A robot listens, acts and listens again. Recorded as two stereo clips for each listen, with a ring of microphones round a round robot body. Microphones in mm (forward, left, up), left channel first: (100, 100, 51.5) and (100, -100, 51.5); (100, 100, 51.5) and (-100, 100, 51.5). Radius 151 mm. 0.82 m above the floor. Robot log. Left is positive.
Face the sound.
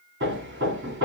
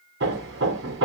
note: The hammering: 140° right.
cmd yaw -140
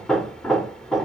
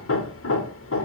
end: Facing the hammering.